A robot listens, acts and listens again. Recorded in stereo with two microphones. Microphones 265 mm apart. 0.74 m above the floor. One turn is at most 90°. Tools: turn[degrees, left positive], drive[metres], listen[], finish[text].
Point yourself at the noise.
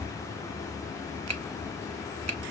Action: turn[-90]
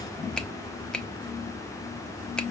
Action: finish[Found it: a finger snap, straight ahead.]